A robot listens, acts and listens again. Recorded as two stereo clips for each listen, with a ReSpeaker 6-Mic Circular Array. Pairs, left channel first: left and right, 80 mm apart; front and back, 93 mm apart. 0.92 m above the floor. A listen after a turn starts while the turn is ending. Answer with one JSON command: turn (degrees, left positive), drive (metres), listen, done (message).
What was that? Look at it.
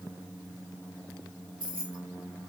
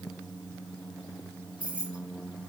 {"turn": -100}
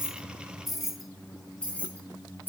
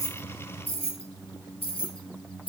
{"turn": 25}
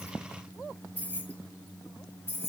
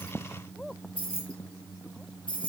{"turn": 30}
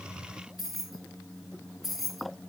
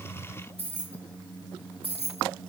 {"done": "Found it: keys jangling, straight ahead."}